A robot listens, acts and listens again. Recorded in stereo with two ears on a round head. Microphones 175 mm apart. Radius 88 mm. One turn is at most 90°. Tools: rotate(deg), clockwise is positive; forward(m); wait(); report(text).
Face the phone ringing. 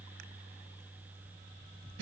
wait()
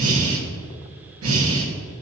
wait()
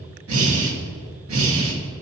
report("I can't make out a phone ringing, only breathing.")